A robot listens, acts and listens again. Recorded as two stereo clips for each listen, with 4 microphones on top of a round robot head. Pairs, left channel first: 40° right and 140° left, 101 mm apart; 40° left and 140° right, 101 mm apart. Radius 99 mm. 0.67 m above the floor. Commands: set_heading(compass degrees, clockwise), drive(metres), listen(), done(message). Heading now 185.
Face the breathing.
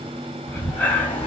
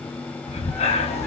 set_heading(155)
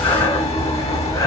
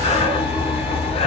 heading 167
set_heading(152)
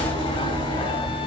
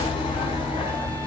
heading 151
done("Facing the breathing.")